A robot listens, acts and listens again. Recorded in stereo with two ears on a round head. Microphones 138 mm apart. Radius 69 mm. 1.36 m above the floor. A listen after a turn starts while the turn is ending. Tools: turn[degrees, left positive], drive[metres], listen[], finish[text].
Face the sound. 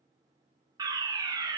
Thought: The fire alarm: about 25° right or 155° right.
Action: turn[-25]
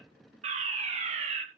Thought: So it is at 125° right.
Action: turn[-125]
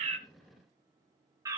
Thought: The fire alarm is now 25° right.
Action: turn[-25]
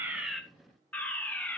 Thought: The fire alarm is now 10° left.
Action: turn[10]
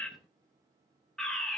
Action: finish[Facing the fire alarm.]